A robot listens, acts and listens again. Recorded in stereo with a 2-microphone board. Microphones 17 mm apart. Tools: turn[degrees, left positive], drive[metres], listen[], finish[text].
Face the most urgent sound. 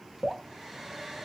Action: listen[]
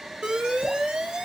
Thought: The alarm: about 55° right or 125° right.
Action: turn[-55]
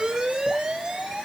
Thought: So it is at 70° right.
Action: turn[-70]
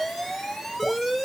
Action: finish[Facing the alarm.]